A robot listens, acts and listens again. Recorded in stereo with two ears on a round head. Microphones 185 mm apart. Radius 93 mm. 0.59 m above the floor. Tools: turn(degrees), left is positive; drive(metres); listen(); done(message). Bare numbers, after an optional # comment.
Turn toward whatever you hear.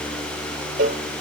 # The cowbell: about 40° right or 140° right.
turn(-40)
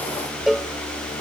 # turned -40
done("Found it: a cowbell, straight ahead.")